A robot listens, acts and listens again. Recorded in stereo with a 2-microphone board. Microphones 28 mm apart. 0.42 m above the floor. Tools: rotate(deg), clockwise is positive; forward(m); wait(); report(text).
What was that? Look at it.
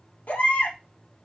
rotate(-90)
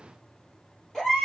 report("Found it: a baby crying, straight ahead, 2 to 4 m away.")